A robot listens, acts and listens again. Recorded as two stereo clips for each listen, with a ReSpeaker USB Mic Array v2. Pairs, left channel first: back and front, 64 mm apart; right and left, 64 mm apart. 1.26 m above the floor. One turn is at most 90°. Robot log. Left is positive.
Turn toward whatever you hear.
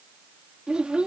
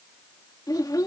note: The child speaking: 75° right.
cmd yaw -75
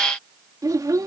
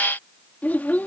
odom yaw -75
note: The child speaking is now 25° right.
cmd yaw -25
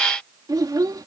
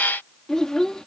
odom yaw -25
note: The child speaking is now 10° right.
cmd yaw -10
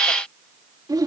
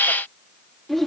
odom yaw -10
end: Found it: a child speaking, straight ahead.